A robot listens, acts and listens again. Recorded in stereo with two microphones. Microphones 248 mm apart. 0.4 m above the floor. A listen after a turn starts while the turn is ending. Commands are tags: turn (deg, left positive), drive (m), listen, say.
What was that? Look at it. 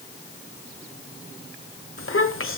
<turn deg="60"/>
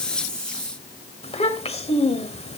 <turn deg="30"/>
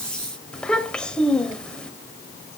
<say>Facing the child speaking.</say>